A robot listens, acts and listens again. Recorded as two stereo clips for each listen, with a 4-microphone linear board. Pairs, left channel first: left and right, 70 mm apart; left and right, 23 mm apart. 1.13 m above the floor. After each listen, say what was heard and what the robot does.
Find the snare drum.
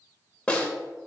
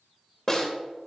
Turn 30° left.
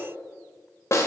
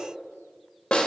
So it is at 140° left. Turn 140° left.
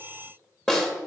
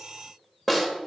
The snare drum is now 10° left. Turn 10° left.
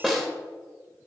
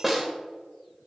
Facing the snare drum, 1 to 2 m away.